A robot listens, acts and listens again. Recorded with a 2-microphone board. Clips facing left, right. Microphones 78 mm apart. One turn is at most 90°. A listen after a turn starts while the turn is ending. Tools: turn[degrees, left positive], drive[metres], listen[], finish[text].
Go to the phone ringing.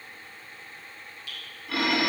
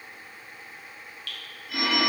Action: turn[90]
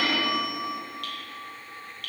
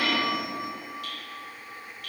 Thought: So it is at 10° right.
Action: turn[-10]
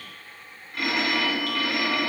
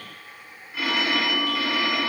Action: drive[1.0]
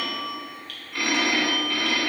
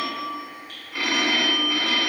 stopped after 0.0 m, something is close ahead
Action: finish[Something is in my way. I am facing the phone ringing but have not reached it.]